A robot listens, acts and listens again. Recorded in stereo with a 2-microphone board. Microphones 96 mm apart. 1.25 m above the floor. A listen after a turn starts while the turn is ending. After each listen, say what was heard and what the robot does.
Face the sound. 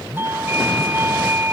The doorbell: about 25° right or 155° right. Turn 25° right.
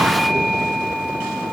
Facing the doorbell.